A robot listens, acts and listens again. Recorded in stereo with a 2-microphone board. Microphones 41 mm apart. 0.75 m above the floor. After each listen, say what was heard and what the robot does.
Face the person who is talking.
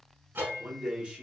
The man speaking: about 25° right or 155° right. Turn 25° right.
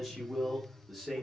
Found it: a man speaking, straight ahead.